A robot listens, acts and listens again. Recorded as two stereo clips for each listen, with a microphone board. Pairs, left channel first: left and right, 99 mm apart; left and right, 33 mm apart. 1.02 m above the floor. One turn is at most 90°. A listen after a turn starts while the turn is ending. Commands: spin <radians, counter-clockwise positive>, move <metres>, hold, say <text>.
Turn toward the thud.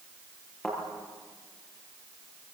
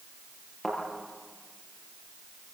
spin 0.26
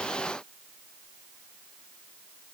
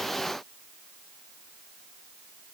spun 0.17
hold
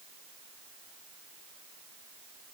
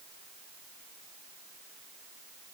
say I heard a thud, but can't make it out now. It was about 5° left or 155° left.